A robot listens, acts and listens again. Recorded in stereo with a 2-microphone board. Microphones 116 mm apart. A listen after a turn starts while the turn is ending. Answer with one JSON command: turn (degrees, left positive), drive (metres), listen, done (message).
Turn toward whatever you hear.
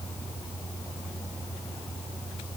{"listen": true}
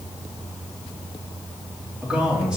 {"turn": -30}
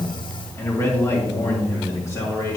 {"turn": 30}
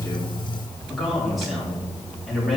{"done": "Found it: a man speaking, straight ahead."}